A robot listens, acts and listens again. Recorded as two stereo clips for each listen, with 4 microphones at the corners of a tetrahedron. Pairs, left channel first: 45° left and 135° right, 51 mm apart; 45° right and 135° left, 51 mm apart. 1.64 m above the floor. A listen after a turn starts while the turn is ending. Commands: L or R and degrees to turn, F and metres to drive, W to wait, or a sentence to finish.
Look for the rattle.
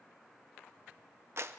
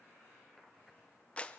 W
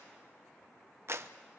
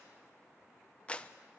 W
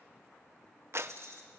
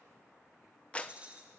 R160
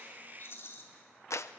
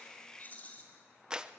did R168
L10
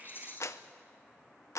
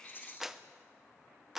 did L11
Facing the rattle, 2 to 4 m away.